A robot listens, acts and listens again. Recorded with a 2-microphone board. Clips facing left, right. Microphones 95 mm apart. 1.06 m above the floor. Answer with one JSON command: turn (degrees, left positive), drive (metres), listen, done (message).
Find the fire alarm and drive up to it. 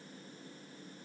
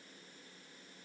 {"listen": true}
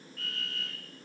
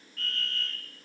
{"turn": 30}
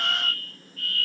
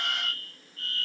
{"turn": -30}
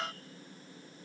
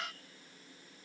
{"listen": true}
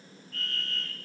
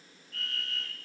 {"drive": 1.0}
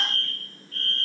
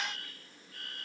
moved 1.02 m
{"turn": -10}
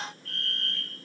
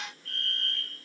{"drive": 1.0}
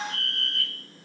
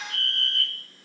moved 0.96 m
{"drive": 1.0}
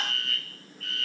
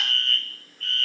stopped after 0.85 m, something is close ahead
{"done": "Arrived at the fire alarm, straight ahead."}